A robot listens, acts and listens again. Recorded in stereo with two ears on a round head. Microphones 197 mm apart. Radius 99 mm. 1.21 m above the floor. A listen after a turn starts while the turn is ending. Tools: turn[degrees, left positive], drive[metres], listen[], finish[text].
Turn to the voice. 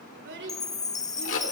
Thought: The child speaking: about 55° right or 125° right.
Action: turn[-55]
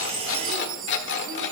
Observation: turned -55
Action: listen[]
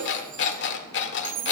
Action: listen[]
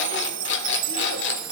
Action: finish[I heard a child speaking, but can't make it out now. It was about straight ahead or 70° right.]